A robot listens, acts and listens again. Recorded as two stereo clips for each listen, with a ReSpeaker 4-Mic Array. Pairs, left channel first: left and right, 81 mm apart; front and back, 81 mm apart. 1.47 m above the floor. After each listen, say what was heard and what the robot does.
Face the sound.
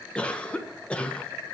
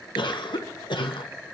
The cough: 15° left. Turn 15° left.
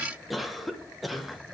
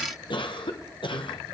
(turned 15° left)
Facing the cough, 1 to 2 m away.